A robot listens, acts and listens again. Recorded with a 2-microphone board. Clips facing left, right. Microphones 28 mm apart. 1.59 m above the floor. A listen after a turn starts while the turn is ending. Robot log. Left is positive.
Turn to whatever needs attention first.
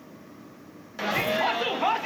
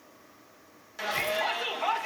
note: The shout: about 15° left or 165° left.
cmd yaw +15
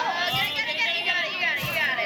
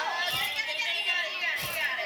note: So it is at 150° left.
cmd yaw +150
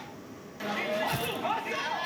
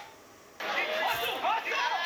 note: The shout is now 25° right.
cmd yaw -25
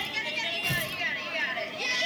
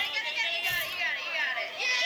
note: The shout is now 10° right.
cmd yaw -10
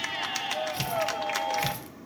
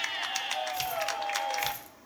end: Found it: a shout, straight ahead, under 1 m away.